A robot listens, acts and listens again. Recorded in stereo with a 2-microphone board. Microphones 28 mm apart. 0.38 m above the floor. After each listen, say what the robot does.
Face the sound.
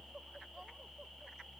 Keep listening.
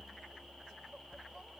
Keep listening.
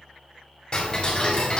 Turn 30° left.
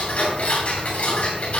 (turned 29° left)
Turn 115° left.
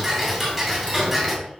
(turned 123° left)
Facing the ticking.